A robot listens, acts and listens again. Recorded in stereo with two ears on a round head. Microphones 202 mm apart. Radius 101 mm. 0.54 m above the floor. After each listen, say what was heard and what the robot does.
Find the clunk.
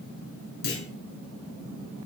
The clunk: about 45° left or 135° left. Turn 45° left.
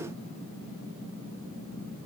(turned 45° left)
Keep listening.
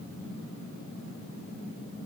I heard a clunk, but can't make it out now. It was about straight ahead or 90° left.